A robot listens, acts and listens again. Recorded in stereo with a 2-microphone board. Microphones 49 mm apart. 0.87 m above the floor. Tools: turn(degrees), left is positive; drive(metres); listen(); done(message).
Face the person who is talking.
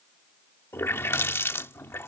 listen()
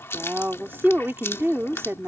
turn(degrees=-60)
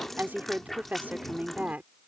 turn(degrees=-40)
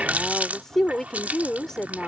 turn(degrees=10)
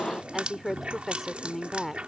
done("Found it: a woman speaking, straight ahead.")